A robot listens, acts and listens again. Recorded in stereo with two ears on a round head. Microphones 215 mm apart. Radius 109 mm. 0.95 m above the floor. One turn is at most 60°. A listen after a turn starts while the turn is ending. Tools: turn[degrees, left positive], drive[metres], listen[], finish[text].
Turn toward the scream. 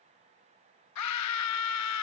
Action: turn[60]
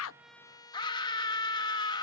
Thought: So it is at 20° left.
Action: turn[20]
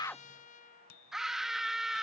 Action: finish[Found it: a scream, straight ahead.]